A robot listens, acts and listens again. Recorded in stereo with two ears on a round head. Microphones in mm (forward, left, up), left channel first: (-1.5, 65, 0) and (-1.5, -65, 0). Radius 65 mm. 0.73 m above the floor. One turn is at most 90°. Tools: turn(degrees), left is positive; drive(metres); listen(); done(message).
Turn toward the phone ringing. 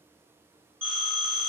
turn(degrees=-15)
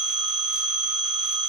done("Facing the phone ringing.")